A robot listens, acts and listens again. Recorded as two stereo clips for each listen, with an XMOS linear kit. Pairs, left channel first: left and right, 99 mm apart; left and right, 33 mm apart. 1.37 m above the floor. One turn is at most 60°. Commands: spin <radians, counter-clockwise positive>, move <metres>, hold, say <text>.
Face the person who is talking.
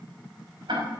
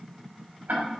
hold
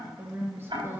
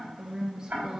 spin -0.44
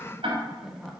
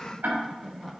say Found it: a woman speaking, straight ahead.